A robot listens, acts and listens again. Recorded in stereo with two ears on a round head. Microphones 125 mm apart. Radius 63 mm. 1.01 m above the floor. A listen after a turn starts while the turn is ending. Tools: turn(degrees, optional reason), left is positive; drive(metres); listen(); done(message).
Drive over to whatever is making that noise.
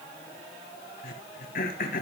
turn(degrees=70, reason="The throat clearing: about 70° left or 110° left.")
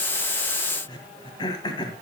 turn(degrees=30, reason="So it is at 30° left.")
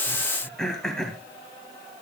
drive(metres=1.0)
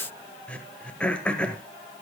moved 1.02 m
turn(degrees=10, reason="The throat clearing is now 10° left.")
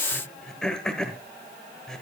drive(metres=1.0)
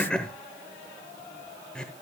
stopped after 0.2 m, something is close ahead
turn(degrees=10, reason="The throat clearing is now 10° left.")
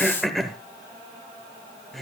done("I am next to the throat clearing.")